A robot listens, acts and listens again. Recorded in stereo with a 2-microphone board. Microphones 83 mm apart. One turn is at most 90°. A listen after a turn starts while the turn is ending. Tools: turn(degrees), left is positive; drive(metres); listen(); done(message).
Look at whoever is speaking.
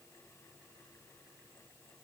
listen()
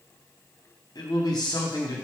turn(degrees=50)
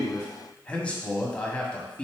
turn(degrees=15)
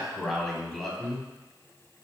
done("Facing the man speaking.")